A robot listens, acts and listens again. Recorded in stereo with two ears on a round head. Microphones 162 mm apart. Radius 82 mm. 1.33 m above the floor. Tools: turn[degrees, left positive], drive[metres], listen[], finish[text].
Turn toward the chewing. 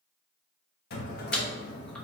Action: turn[30]
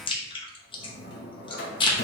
Thought: So it is at 145° left.
Action: turn[145]
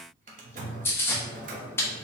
Thought: The chewing is now 15° left.
Action: turn[15]
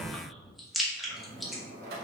Action: finish[Found it: chewing, straight ahead.]